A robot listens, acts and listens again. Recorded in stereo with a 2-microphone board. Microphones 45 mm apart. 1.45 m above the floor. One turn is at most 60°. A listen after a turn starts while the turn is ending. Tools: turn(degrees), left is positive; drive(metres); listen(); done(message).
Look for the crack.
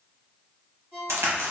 turn(degrees=-60)
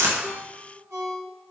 listen()
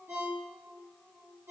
done("I heard a crack, but can't make it out now. It was about 15° right or 45° right.")